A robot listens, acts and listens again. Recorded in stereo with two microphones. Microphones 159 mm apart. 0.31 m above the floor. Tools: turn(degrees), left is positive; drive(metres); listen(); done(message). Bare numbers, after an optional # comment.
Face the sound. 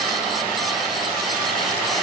listen()
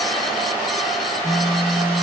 # The phone buzzing: about 15° right or 165° right.
turn(-15)
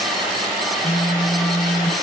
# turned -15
done("Found it: a phone buzzing, straight ahead.")